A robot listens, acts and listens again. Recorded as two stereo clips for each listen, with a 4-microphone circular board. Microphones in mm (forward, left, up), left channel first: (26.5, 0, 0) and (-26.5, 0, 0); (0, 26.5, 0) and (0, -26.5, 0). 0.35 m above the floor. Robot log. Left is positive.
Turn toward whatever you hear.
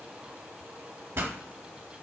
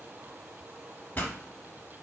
note: The pop: 145° left.
cmd yaw +145
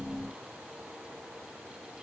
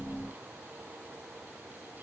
end: Facing where the pop came from. I can't hear it now.